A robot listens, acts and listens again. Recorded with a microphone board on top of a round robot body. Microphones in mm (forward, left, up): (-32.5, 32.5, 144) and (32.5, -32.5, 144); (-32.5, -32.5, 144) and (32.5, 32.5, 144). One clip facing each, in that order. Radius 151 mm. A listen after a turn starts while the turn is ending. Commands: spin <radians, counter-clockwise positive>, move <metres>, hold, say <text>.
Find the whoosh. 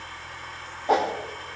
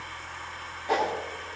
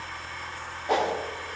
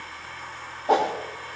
spin 1.48
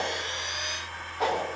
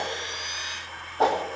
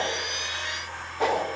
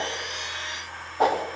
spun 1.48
say Facing the whoosh, 2 to 4 m away.